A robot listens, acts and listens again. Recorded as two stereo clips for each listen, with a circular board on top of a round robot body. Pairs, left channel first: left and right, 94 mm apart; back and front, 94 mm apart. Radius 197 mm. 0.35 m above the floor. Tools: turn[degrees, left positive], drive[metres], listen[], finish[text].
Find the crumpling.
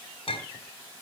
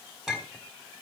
Action: listen[]
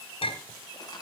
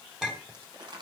Thought: The crumpling: 40° left.
Action: turn[40]
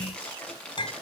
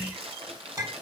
Thought: The crumpling is now 10° left.
Action: turn[10]
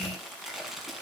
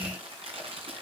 Action: finish[Found it: crumpling, straight ahead.]